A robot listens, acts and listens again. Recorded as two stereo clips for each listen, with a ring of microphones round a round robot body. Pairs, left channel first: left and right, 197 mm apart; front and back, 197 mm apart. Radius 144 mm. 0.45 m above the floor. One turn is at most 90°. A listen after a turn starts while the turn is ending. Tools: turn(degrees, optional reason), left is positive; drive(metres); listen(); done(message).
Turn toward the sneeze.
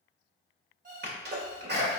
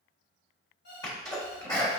turn(degrees=-75, reason="The sneeze: 75° right.")
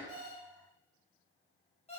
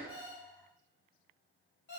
done("Facing where the sneeze came from. I can't hear it now.")